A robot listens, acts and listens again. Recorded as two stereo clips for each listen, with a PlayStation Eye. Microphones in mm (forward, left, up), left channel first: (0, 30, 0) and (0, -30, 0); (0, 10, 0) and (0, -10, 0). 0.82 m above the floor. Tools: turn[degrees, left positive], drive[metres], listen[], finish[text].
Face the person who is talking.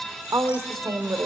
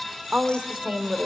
Action: turn[-90]
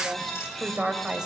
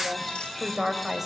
Thought: So it is at 10° right.
Action: turn[-10]
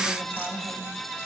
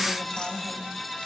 Action: listen[]
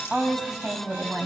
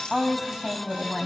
Thought: The woman speaking is now 10° right.
Action: turn[-10]
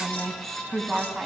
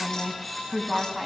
Action: finish[Facing the woman speaking.]